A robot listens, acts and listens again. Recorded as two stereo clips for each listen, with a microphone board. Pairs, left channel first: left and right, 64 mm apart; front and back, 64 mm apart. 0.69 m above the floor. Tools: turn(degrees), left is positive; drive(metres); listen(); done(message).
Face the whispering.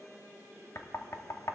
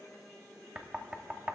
listen()
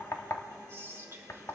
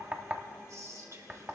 turn(degrees=-140)
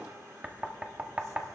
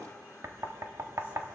listen()
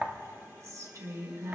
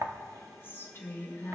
turn(degrees=-55)
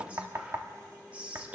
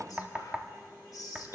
turn(degrees=-20)
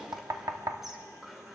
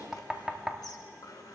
done("Facing the whispering.")